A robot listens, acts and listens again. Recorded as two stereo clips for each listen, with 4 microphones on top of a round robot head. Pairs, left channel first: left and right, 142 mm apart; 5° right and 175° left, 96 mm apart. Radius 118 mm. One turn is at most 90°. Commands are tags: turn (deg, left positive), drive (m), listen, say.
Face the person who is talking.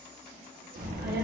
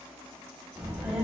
<turn deg="-90"/>
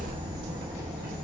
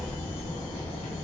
<turn deg="-15"/>
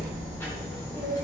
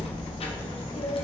<turn deg="20"/>
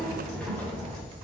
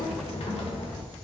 <turn deg="15"/>
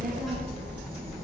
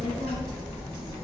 <say>Found it: a child speaking, straight ahead.</say>